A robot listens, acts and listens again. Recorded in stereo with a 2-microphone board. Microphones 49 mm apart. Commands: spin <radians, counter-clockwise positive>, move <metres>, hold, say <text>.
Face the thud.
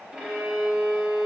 hold
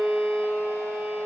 hold
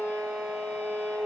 say I can't make out a thud, only a violin.